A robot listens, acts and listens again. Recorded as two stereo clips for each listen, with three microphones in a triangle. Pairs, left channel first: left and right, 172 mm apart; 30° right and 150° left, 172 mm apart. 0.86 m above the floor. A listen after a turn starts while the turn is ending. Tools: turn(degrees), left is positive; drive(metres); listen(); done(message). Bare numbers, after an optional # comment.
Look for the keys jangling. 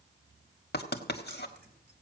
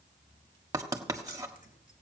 # The keys jangling: 70° right.
turn(-70)
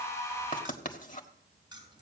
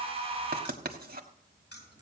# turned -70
# The keys jangling is now 25° right.
turn(-25)
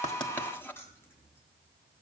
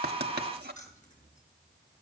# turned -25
# The keys jangling is now 15° left.
turn(15)
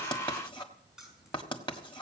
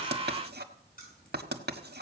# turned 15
done("Facing the keys jangling, over 4 m away.")